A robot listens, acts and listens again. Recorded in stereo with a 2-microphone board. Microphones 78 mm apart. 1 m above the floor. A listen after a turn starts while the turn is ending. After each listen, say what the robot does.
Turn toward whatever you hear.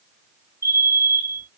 Turn 40° left.
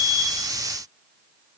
Keep listening.
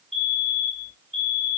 Found it: a fire alarm, straight ahead, 2 to 4 m away.